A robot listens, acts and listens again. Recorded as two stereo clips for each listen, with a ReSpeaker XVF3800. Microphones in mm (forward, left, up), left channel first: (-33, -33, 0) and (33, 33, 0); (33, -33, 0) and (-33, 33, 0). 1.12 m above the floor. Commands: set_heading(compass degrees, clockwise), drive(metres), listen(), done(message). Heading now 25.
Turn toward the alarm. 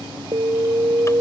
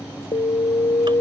set_heading(35)
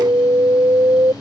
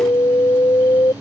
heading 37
done("Facing the alarm.")